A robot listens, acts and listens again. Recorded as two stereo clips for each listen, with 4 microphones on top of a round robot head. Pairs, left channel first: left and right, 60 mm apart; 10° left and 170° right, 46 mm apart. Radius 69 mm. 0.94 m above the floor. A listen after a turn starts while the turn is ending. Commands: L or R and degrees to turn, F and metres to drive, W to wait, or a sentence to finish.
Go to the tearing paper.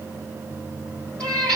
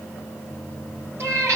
W
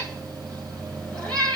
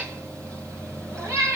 W
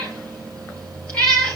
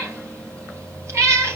I can't make out tearing paper, only a cat meowing.